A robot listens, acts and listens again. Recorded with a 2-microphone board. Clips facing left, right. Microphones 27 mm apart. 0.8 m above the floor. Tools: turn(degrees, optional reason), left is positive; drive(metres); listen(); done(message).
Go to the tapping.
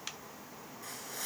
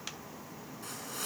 listen()
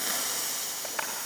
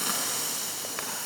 turn(degrees=30)
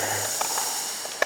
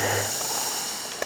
turn(degrees=150, reason="So it is at 150° left.")
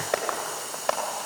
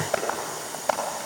turn(degrees=40, reason="The tapping is now 40° left.")
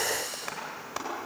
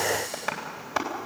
turn(degrees=-15, reason="The tapping is now 15° right.")
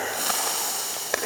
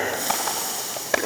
drive(metres=1.0)
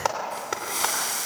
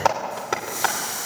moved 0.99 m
turn(degrees=-10, reason="The tapping is now 10° right.")
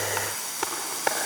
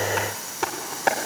drive(metres=1.0)
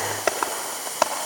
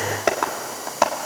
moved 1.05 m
drive(metres=1.0)
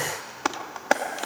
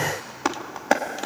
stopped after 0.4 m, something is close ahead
done("Arrived at the tapping, straight ahead.")